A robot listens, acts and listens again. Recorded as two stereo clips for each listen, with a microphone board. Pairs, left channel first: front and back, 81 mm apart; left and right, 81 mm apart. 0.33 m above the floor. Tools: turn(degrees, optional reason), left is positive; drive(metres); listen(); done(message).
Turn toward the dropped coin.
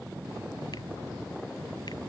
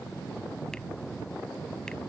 listen()
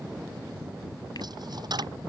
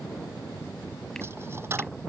turn(degrees=-150, reason="The dropped coin: 150° right.")
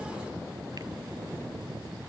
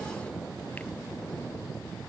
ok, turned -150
done("Facing where the dropped coin came from. I can't hear it now.")